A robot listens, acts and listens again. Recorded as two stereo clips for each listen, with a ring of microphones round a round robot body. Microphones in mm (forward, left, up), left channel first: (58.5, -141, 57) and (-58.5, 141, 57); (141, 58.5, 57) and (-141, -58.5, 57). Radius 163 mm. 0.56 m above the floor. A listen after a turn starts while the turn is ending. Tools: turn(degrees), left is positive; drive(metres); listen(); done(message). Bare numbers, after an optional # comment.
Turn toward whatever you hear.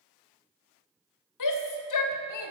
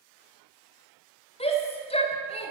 # The shout: 50° right.
turn(-50)
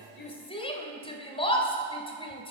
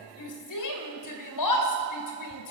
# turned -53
done("Found it: a shout, straight ahead, 2 to 4 m away.")